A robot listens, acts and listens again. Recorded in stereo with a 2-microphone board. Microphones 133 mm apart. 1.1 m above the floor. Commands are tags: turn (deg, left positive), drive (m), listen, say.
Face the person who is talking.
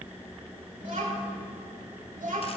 <turn deg="-70"/>
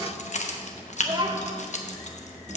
<turn deg="-40"/>
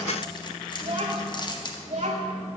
<turn deg="-65"/>
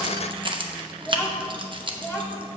<say>Facing the child speaking.</say>